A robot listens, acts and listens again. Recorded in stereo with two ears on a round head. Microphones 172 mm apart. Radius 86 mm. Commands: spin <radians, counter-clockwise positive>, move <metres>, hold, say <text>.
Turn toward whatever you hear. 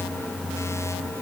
hold
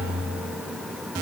hold
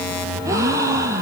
spin -0.26
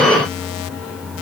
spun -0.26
hold
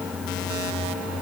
say I heard a gasp, but can't make it out now. It was about straight ahead or 150° right.